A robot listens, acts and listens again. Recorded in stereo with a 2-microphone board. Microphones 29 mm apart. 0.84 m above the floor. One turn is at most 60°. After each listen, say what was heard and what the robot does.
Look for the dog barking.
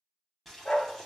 The dog barking: about 40° left or 140° left. Turn 40° left.
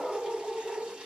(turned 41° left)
So it is at 10° left. Turn 10° left.
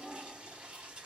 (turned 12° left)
Found it: a dog barking, straight ahead, 1 to 2 m away.